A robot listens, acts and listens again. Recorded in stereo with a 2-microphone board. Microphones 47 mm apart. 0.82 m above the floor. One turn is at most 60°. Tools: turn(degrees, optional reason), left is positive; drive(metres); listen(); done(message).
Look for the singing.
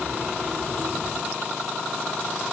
listen()
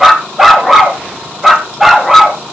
listen()
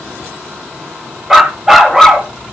done("I can't make out singing to turn to.")